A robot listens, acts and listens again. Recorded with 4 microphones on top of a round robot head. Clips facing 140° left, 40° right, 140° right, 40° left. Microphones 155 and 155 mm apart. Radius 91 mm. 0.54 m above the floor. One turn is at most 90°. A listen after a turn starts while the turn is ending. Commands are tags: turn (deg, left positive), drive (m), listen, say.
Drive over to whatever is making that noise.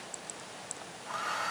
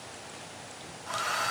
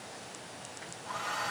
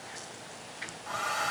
<turn deg="15"/>
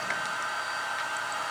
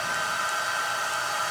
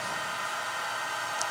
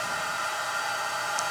<drive m="1.0"/>
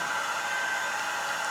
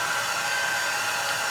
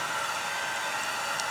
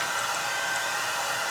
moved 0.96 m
<drive m="1.0"/>
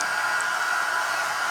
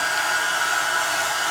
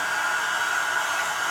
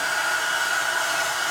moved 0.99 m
<drive m="1.0"/>
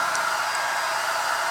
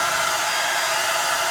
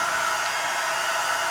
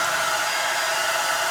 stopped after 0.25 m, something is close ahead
<say>Arrived at the hair dryer, straight ahead.</say>